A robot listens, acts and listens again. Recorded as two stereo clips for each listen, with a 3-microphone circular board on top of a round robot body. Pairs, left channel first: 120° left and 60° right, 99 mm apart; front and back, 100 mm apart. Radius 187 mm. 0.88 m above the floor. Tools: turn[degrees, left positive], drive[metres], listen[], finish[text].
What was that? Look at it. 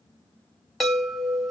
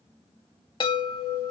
Thought: The chime: 35° left.
Action: turn[35]
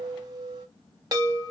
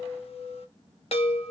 Thought: The chime is now 10° right.
Action: turn[-10]
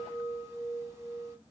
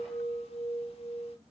Action: finish[Found it: a chime, straight ahead.]